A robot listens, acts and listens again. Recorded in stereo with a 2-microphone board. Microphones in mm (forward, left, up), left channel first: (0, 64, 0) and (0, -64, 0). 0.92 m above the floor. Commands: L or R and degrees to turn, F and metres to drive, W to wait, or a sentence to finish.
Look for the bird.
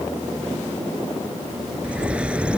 R30
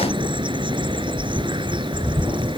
R140
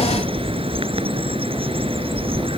R45
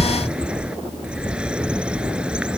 R10
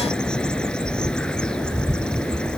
Facing the bird.